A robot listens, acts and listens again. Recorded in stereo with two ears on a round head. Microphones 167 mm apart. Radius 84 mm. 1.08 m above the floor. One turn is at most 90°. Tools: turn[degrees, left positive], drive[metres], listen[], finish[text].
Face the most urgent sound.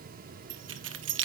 Action: listen[]
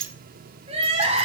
Thought: The crying: about 35° right or 145° right.
Action: turn[-35]
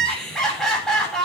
Action: finish[Found it: crying, straight ahead, over 4 m away.]